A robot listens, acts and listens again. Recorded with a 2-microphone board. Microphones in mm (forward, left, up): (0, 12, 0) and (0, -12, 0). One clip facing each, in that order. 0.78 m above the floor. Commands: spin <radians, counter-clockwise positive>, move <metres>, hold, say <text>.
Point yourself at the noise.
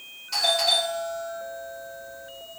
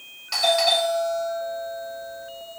spin -1.05
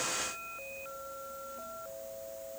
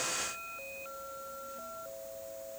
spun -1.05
hold
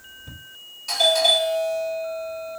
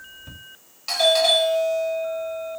spin -0.70
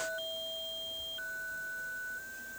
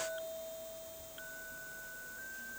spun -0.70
hold
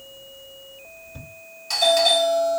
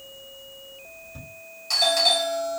say Found it: a doorbell, straight ahead.